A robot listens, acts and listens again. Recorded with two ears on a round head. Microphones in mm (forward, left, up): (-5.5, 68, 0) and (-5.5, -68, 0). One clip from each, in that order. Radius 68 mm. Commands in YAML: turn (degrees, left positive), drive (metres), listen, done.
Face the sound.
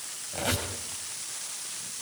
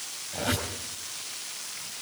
turn: 40
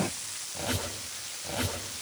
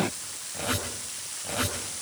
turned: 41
done: "Facing the squeak, over 4 m away."